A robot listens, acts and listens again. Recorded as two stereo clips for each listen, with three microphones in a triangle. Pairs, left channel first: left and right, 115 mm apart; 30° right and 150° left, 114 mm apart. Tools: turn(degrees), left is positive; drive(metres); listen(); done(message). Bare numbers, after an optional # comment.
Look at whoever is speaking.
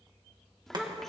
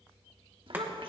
# The child speaking: 175° left.
turn(175)
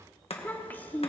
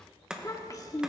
# The child speaking is now 20° left.
turn(20)
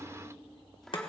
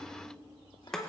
done("Facing the child speaking, 1 to 2 m away.")